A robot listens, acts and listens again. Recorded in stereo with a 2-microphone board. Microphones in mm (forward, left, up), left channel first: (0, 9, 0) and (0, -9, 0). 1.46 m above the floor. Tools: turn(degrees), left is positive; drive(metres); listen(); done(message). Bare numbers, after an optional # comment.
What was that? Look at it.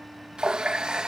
# The running tap: about 50° right or 130° right.
turn(-50)
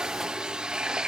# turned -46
# So it is at 70° right.
turn(-70)
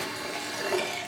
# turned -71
done("Found it: a running tap, straight ahead.")